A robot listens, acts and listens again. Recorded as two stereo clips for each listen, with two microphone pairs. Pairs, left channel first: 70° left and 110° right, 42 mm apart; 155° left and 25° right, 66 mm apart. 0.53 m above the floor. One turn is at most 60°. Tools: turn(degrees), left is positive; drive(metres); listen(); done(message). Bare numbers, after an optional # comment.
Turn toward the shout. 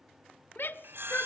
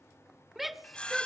# The shout: 65° left.
turn(60)
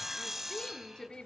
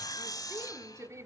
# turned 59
done("Facing the shout, 1 to 2 m away.")